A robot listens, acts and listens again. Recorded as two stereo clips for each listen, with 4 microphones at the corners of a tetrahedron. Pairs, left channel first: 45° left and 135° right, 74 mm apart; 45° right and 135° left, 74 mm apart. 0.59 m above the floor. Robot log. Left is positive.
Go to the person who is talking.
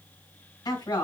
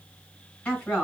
note: The woman speaking: 20° left.
cmd yaw +20
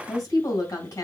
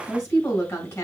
cmd fwd 1.0
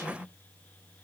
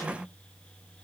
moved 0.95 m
cmd idle
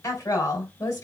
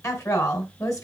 cmd fwd 1.0
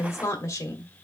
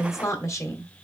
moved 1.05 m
cmd fwd 1.0
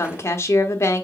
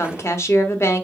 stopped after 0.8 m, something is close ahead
end: Arrived at the woman speaking, straight ahead.